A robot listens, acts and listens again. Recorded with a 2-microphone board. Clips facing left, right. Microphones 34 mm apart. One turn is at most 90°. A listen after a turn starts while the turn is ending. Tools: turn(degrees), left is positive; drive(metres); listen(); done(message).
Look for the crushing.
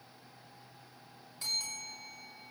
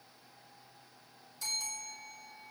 listen()
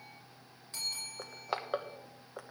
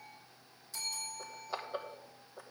turn(degrees=65)
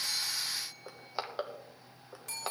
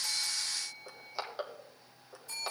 turn(degrees=15)
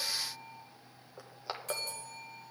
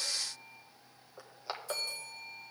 done("Facing the crushing.")